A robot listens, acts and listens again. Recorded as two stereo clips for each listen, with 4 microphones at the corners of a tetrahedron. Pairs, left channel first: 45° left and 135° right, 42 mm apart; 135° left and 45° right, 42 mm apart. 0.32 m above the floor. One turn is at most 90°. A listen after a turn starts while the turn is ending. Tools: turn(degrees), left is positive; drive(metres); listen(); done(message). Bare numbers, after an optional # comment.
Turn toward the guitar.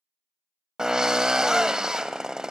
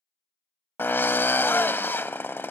listen()
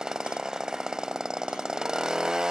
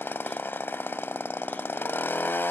listen()
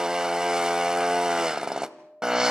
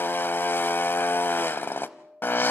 # The guitar: 75° right.
turn(-75)
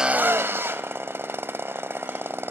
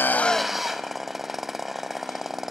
listen()
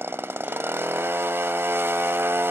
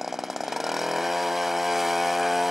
listen()
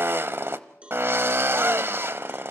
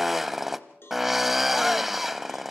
done("I heard a guitar from this way, but can't make it out now.")